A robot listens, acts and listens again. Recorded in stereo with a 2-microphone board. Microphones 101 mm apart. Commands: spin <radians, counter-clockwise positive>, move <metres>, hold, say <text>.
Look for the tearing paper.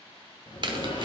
spin -0.79
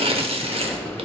spin -1.40
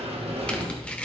spin 0.17
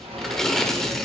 say Facing the tearing paper.